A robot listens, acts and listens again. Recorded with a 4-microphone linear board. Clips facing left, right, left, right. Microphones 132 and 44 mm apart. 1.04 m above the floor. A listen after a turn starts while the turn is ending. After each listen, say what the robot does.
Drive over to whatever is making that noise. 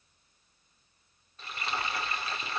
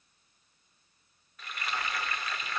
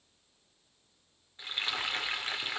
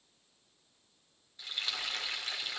Turn 30° left.
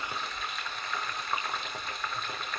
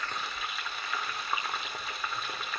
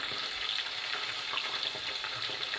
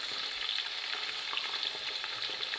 Drive 1.0 m forward.
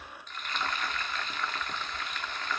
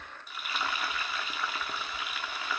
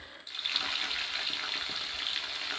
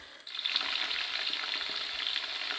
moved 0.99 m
Turn 10° right.
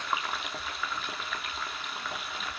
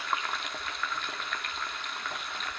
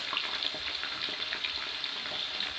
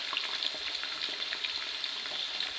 Drive 1.0 m forward.
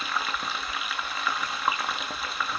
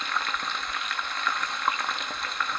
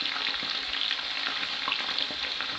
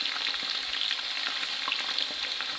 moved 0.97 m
Drive 1.0 m forward.
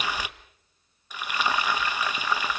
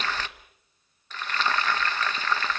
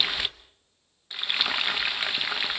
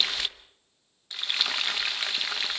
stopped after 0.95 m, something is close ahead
Turn 15° left.
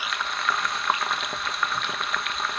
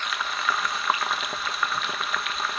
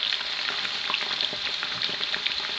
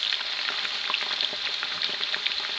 Arrived at the frying, straight ahead.